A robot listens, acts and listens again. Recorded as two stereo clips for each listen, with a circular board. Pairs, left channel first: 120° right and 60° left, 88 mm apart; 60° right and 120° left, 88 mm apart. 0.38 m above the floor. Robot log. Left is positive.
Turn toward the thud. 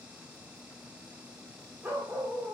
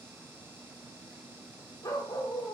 cmd idle
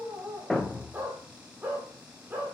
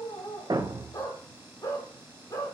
note: The thud: 150° left.
cmd yaw +150
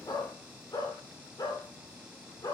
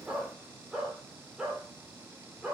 end: Facing where the thud came from. I can't hear it now.